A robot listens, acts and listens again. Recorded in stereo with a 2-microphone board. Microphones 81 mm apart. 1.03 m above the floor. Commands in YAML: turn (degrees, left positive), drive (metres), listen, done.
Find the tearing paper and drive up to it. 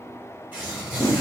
turn: -15
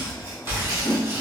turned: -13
turn: -150
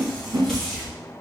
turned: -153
drive: 1.0
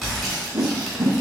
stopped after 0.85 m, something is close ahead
done: "I am next to the tearing paper."